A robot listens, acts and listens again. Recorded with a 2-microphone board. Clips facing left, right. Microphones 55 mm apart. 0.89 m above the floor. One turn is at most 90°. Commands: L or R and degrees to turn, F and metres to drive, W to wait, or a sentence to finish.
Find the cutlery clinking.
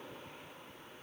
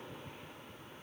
W
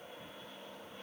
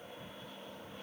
W
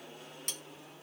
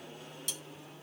L50
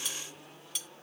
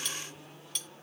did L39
L10
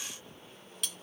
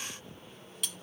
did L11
Found it: cutlery clinking, straight ahead.